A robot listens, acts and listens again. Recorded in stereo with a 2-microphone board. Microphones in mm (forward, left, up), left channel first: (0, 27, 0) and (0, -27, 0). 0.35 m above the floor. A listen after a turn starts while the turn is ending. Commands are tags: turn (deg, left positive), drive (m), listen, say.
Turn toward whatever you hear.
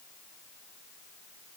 <listen/>
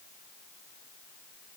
<listen/>
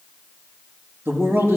<turn deg="-50"/>
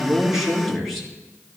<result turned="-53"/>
<say>Facing the man speaking, over 4 m away.</say>